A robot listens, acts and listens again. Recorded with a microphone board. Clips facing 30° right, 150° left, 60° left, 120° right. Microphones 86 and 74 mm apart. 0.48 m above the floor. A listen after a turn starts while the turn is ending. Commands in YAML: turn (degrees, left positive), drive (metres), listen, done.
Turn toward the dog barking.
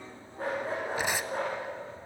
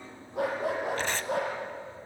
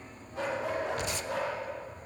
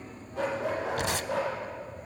turn: 150
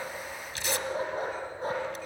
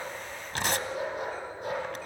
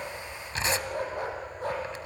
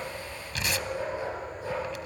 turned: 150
turn: 25
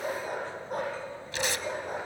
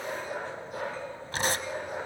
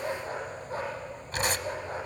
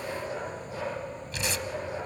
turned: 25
turn: 15
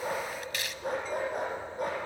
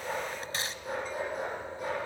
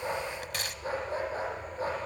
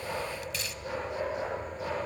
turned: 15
done: "Facing the dog barking."